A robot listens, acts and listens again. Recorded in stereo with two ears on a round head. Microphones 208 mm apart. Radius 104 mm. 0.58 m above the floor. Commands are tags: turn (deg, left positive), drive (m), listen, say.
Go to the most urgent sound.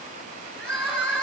<turn deg="30"/>
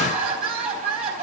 <turn deg="-30"/>
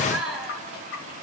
<drive m="1.0"/>
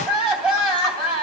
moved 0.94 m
<drive m="1.0"/>
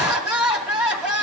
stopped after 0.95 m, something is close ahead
<say>Arrived at the crying, straight ahead.</say>